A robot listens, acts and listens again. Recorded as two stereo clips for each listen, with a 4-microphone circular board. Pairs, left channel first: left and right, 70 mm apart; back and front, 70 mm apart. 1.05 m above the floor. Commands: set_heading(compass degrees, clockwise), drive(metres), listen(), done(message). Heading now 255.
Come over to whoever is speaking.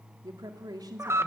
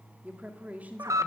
set_heading(325)
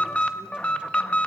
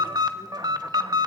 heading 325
listen()
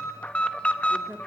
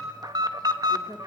set_heading(335)
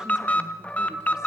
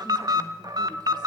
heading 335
listen()
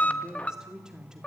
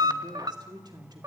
set_heading(345)
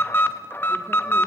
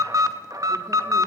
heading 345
listen()
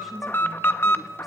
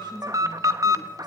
listen()
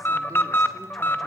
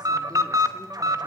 done("Facing where the woman speaking came from. I can't hear it now. I did not reach it.")